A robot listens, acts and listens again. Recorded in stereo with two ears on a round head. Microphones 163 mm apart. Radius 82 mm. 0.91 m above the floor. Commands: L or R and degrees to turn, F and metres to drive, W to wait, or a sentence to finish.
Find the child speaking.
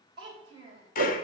R30
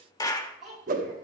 Found it: a child speaking, straight ahead, 2 to 4 m away.